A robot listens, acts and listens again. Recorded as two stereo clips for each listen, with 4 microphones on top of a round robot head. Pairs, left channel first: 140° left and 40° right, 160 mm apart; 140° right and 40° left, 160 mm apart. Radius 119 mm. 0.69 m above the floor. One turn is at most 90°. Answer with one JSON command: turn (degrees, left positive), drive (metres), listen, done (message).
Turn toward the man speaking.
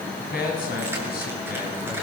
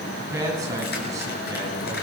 {"turn": 90}
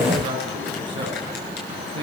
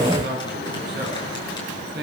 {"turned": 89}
{"turn": 20}
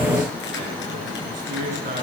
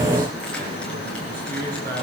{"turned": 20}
{"done": "Facing the man speaking."}